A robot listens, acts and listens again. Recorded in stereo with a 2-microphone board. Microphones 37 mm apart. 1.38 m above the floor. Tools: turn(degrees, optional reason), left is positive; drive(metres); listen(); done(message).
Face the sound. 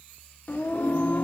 turn(degrees=55, reason="The singing: about 55° left or 125° left.")
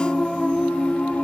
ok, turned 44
turn(degrees=35, reason="So it is at 35° left.")
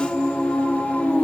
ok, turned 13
turn(degrees=45, reason="The singing is now 45° left.")
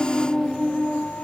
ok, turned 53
turn(degrees=30, reason="The singing is now 30° left.")
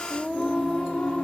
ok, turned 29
turn(degrees=20, reason="The singing is now 20° left.")
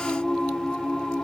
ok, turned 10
turn(degrees=15, reason="The singing is now 15° left.")
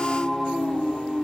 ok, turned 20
done("Found it: singing, straight ahead, 1 to 2 m away.")